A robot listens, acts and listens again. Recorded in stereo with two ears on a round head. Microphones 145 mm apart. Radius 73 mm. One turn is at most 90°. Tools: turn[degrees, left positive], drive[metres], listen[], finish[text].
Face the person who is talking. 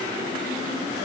Action: listen[]
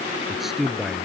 Action: turn[-30]
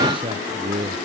Thought: So it is at 145° right.
Action: turn[-90]
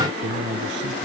Thought: The man speaking is now 80° right.
Action: turn[-80]
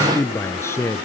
Thought: The man speaking is now 15° left.
Action: turn[15]
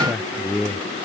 Action: finish[Found it: a man speaking, straight ahead.]